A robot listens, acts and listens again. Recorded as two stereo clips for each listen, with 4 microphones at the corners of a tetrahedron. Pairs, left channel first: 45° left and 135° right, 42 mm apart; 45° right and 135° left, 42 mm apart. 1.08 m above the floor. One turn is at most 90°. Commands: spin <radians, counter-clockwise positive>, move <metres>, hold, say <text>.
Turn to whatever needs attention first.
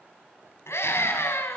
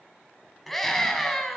spin 0.70
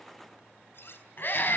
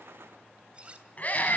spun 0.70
spin 0.17
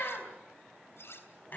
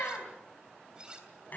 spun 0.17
say Found it: a scream, straight ahead, over 4 m away.